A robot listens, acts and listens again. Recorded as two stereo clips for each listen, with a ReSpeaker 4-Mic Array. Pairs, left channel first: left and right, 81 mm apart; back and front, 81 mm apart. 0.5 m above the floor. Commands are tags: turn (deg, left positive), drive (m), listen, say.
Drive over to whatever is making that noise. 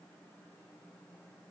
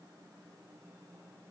<listen/>
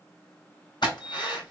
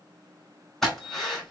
<turn deg="95"/>
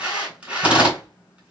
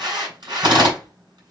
<turn deg="-15"/>
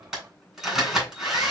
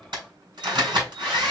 <drive m="1.0"/>
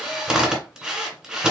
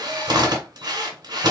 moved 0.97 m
<turn deg="-10"/>
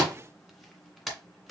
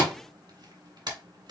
<drive m="1.0"/>
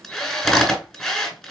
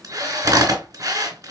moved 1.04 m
<turn deg="10"/>
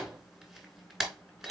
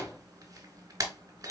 <drive m="1.0"/>
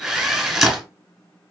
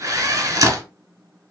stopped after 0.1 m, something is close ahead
<say>Arrived at the drill, straight ahead.</say>